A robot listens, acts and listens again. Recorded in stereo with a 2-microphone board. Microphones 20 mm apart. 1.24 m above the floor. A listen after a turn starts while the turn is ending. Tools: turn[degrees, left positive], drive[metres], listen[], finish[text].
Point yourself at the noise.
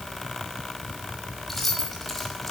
Action: turn[30]
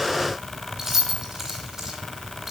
Thought: So it is at 15° right.
Action: turn[-15]
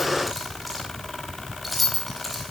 Action: finish[Found it: keys jangling, straight ahead, over 4 m away.]